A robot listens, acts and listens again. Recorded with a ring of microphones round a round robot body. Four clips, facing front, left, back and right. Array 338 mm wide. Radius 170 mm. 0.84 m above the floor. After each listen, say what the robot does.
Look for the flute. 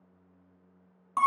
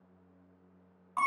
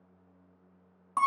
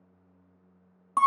Keep listening.
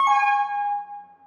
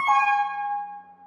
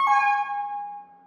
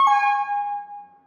Keep listening.
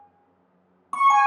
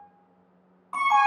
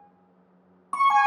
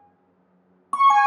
I can't make out a flute, only an alarm.